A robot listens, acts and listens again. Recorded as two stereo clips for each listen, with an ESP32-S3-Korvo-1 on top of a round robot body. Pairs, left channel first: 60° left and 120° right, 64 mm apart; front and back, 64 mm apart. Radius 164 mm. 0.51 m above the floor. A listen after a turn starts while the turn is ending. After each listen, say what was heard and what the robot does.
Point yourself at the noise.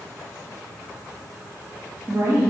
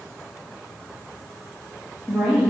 The woman speaking: 105° right. Turn 105° right.
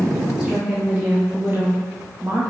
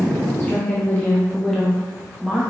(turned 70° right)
The woman speaking is now 105° right. Turn 105° right.
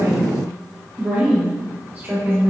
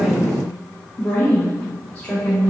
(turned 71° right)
The woman speaking is now 75° right. Turn 75° right.
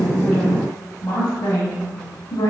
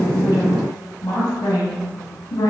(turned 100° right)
The woman speaking is now 25° left. Turn 25° left.
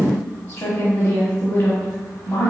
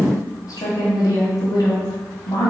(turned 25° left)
Facing the woman speaking, 1 to 2 m away.